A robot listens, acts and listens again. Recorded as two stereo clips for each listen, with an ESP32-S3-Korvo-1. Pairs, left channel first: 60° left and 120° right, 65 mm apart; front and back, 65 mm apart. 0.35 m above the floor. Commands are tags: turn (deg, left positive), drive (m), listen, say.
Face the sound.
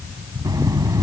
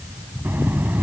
<turn deg="-120"/>
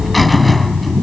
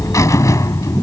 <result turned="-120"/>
<turn deg="-25"/>
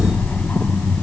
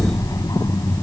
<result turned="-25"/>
<say>Facing the buzzer.</say>